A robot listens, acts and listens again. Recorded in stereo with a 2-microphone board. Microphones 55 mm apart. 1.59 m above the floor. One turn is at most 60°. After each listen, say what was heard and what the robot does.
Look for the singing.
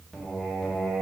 Turn 30° right.
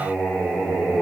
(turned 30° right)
So it is at 15° left. Turn 15° left.
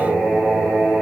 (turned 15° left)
Facing the singing.